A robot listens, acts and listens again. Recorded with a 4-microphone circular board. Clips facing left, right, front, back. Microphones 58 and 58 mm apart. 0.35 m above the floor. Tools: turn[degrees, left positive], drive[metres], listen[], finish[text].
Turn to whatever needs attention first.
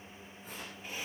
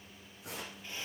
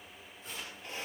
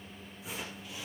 Action: listen[]
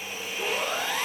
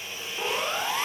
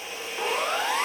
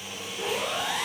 Thought: The siren: 25° right.
Action: turn[-25]
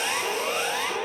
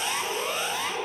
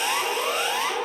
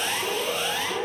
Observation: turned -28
Action: finish[Facing the siren, over 4 m away.]